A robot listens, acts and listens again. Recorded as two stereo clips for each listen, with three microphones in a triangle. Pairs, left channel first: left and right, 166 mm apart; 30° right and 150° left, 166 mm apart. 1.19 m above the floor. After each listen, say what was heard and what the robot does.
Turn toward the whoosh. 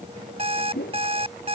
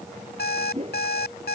The whoosh: 95° left. Turn 95° left.
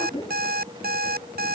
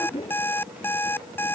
The whoosh is now 25° left. Turn 25° left.
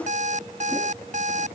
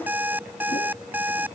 Keep listening.
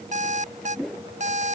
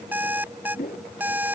Found it: a whoosh, straight ahead.